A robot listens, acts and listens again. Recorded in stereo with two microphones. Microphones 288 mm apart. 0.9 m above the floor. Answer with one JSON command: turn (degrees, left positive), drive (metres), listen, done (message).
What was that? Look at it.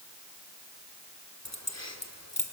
{"turn": 60}
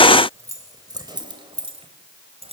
{"turn": -20}
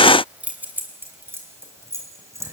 {"turn": -10}
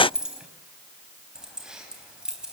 {"done": "Found it: keys jangling, straight ahead, 2 to 4 m away."}